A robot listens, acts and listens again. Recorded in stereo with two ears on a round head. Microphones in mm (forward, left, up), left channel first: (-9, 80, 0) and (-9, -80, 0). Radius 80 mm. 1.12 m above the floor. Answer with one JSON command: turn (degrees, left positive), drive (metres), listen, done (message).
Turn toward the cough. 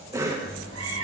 {"turn": -15}
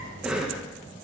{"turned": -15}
{"done": "Found it: a cough, straight ahead, 1 to 2 m away."}